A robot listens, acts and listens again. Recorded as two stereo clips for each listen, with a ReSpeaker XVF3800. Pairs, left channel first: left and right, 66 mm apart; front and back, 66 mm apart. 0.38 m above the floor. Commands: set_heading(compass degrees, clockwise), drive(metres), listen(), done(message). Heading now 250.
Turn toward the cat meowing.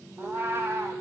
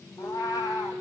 set_heading(285)
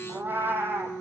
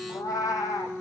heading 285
set_heading(320)
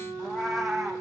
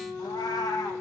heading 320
done("Facing the cat meowing, 2 to 4 m away.")